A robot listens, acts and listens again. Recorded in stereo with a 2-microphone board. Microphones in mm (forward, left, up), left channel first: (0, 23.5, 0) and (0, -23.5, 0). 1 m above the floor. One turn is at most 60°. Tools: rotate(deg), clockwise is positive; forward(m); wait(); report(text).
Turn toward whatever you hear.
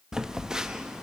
rotate(30)
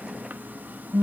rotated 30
rotate(60)
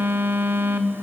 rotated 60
rotate(50)
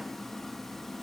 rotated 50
wait()
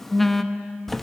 report("Facing the phone buzzing, under 1 m away.")